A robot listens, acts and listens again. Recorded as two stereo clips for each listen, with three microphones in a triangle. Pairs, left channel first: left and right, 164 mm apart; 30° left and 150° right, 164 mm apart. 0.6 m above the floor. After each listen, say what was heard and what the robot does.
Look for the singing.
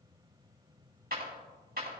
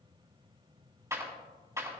Keep listening.
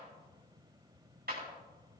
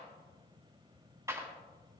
Keep listening.
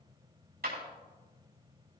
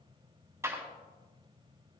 I can't make out singing, only a clap.